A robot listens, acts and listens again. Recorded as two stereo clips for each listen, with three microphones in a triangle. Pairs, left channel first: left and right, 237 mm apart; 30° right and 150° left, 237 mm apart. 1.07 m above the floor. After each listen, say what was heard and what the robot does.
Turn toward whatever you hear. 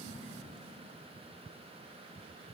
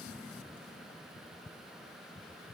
Keep listening.
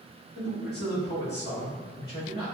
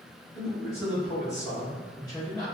The man speaking: 40° left. Turn 40° left.
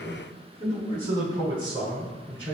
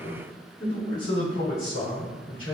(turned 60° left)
The man speaking is now 25° right. Turn 25° right.
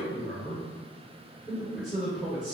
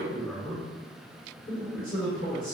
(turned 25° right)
Found it: a man speaking, straight ahead.